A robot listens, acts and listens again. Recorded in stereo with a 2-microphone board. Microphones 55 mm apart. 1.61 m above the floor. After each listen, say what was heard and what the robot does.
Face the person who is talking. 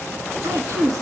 Turn 90° right.
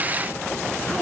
Keep listening.
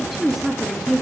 Found it: a woman speaking, straight ahead, 2 to 4 m away.